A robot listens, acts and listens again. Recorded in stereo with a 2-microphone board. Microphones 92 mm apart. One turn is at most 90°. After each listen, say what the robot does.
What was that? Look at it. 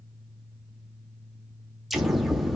Turn 30° left.
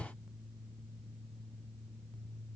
Keep listening.
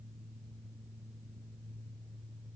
I heard an explosion, but can't make it out now. It was about 30° right or 150° left.